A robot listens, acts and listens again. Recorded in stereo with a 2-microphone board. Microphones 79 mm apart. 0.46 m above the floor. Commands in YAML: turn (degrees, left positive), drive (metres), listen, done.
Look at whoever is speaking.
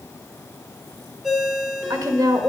turn: -55
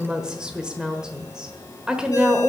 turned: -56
turn: -15
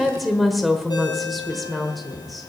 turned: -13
done: "Facing the woman speaking."